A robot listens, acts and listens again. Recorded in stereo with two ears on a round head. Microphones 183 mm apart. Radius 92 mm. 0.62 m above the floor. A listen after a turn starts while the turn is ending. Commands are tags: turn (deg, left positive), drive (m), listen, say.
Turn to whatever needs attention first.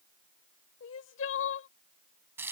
<turn deg="70"/>
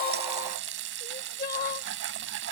<turn deg="40"/>
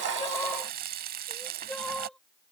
<say>Found it: crying, straight ahead.</say>